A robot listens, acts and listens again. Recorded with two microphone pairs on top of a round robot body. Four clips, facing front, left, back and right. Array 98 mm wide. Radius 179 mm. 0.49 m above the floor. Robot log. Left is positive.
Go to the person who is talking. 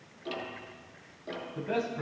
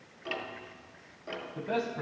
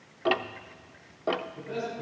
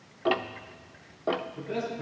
note: The man speaking: 60° left.
cmd yaw +60
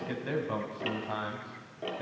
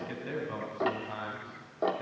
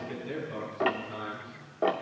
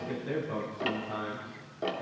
note: The man speaking is now 10° right.
cmd yaw -10
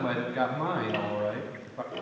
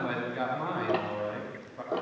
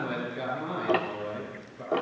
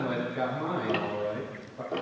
cmd fwd 1.0
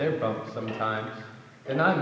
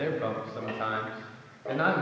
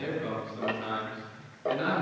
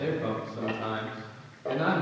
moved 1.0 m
cmd fwd 1.0
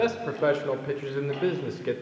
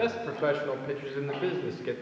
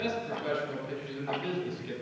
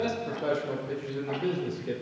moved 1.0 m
note: The man speaking is now 10° left.
cmd yaw +10
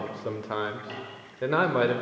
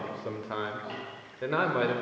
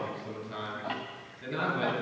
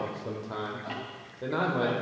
cmd fwd 1.0
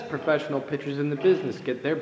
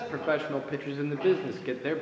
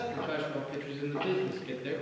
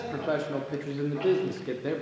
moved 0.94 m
cmd fwd 1.0
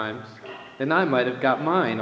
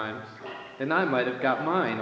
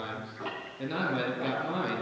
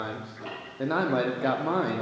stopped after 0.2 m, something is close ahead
end: I am next to the man speaking.